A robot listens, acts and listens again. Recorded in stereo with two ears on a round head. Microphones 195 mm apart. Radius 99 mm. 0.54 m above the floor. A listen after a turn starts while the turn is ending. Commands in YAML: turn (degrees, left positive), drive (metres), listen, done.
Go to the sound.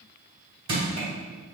turn: -25
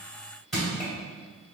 drive: 1.0
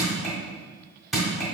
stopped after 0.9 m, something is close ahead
done: "I am next to the crushing."